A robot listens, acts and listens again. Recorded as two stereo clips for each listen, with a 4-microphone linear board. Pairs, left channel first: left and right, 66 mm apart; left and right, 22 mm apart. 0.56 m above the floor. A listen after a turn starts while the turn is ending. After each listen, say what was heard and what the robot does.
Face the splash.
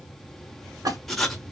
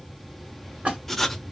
The splash: about 75° right or 105° right. Turn 75° right.
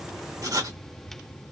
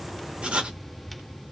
Keep listening.
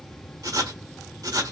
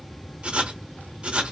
I heard a splash, but can't make it out now. It was about straight ahead or 30° right.